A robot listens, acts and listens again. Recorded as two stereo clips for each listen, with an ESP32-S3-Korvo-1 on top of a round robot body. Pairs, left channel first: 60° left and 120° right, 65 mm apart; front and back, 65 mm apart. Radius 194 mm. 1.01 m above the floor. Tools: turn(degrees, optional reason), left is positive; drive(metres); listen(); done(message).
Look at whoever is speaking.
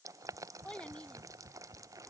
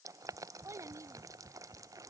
turn(degrees=135, reason="The child speaking: 135° left.")
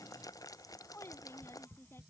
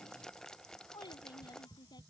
done("Found it: a child speaking, straight ahead.")